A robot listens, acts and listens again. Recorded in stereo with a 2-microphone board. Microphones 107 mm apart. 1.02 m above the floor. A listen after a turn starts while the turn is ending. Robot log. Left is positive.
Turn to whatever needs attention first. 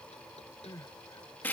note: The crying: about 40° left or 140° left.
cmd yaw +40
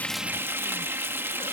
cmd idle
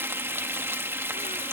cmd idle
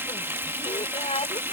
note: So it is at 100° left.
cmd yaw +100
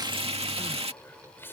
note: The crying is now 20° left.
cmd yaw +20
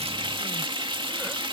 cmd idle
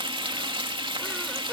cmd idle
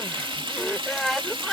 end: Found it: crying, straight ahead.